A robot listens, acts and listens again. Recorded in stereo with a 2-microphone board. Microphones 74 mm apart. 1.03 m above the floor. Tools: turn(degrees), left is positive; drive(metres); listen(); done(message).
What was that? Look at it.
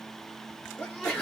turn(degrees=15)
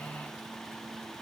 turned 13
listen()
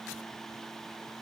done("I heard a sneeze, but can't make it out now. It was about 5° left or 150° left.")